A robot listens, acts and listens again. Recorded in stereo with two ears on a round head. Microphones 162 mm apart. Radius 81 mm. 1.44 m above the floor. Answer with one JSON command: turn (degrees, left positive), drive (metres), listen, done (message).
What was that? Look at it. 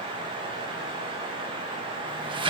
{"turn": -25}
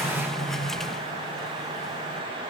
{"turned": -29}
{"done": "Facing the sliding door, 1 to 2 m away."}